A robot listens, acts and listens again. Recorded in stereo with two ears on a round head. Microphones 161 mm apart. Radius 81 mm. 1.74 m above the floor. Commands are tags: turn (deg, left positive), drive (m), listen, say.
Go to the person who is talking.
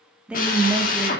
<turn deg="-30"/>
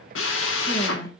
<listen/>
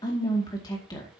<turn deg="25"/>
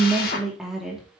<drive m="1.0"/>
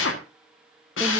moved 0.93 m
<listen/>
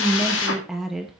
<drive m="1.0"/>
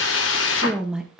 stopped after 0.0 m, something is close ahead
<say>Arrived at the woman speaking, straight ahead.</say>